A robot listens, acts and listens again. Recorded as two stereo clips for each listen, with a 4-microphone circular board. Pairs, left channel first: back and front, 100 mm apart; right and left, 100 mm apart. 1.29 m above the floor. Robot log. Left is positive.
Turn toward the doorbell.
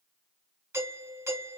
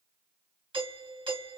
note: The doorbell: 60° left.
cmd yaw +60
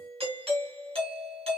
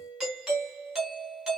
end: Found it: a doorbell, straight ahead, 1 to 2 m away.